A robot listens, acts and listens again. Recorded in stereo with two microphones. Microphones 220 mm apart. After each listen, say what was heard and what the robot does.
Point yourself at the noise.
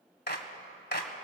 The clap: about 50° left or 130° left. Turn 50° left.
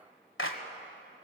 So it is at 75° left. Turn 75° left.
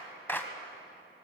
The clap is now 10° left. Turn 10° left.
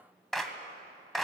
Found it: a clap, straight ahead.